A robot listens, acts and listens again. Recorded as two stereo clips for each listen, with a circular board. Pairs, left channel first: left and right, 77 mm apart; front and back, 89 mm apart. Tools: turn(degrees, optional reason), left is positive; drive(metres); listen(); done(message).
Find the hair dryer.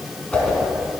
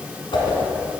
listen()
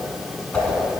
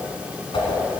listen()
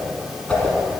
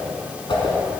done("I can't make out a hair dryer to turn to.")